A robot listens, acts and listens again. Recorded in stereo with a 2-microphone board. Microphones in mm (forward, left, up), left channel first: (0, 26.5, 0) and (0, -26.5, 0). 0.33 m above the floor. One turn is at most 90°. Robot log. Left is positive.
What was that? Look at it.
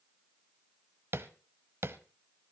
note: The tapping: about 55° right or 125° right.
cmd yaw -55
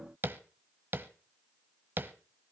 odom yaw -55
note: So it is at 55° right.
cmd yaw -55
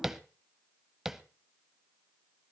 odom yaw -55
note: The tapping is now 10° right.
cmd yaw -10
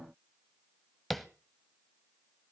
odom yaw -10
end: Found it: tapping, straight ahead.